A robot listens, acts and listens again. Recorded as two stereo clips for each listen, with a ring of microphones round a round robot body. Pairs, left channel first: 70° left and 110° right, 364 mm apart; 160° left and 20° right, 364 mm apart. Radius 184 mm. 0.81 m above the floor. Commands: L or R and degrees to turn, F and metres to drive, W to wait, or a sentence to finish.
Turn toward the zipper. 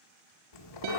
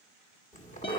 L85
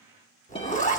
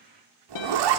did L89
Facing the zipper.